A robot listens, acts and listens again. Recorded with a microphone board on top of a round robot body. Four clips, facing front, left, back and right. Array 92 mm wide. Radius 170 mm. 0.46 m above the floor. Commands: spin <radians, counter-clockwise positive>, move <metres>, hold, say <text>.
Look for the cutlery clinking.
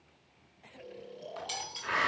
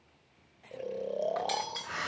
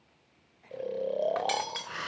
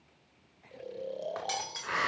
spin -2.88
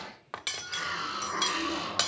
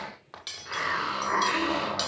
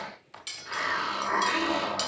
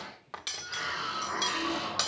say Found it: cutlery clinking, straight ahead, 1 to 2 m away.